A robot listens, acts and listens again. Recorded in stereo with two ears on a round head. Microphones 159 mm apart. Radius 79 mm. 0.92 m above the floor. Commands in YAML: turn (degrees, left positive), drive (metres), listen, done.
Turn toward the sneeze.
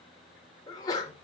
turn: 25
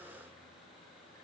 listen: true
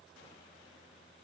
done: "I heard a sneeze, but can't make it out now. It was about straight ahead or 130° left."